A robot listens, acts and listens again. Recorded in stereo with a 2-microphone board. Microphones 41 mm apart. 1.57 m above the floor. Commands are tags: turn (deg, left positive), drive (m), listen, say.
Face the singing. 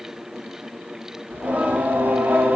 <turn deg="-55"/>
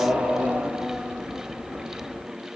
<turn deg="-20"/>
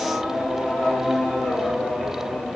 <say>Found it: singing, straight ahead, 2 to 4 m away.</say>